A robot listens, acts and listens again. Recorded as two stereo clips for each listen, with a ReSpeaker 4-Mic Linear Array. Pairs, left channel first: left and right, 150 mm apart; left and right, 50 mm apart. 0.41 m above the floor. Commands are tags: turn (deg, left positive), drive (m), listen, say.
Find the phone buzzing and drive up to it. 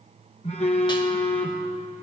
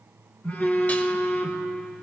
<turn deg="45"/>
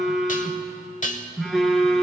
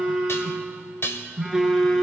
<drive m="1.0"/>
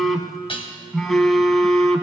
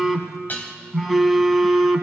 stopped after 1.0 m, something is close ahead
<say>I am next to the phone buzzing.</say>